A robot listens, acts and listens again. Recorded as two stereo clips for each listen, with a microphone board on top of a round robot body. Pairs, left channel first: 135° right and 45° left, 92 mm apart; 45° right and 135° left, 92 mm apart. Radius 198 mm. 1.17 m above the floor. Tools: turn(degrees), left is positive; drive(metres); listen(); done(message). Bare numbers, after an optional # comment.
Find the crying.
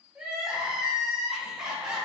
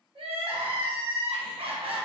# The crying: 125° left.
turn(125)
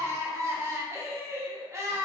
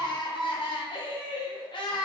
# The crying is now 15° right.
turn(-15)
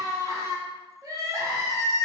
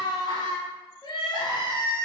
# The crying is now 10° right.
turn(-10)
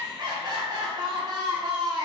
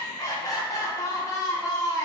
done("Found it: crying, straight ahead.")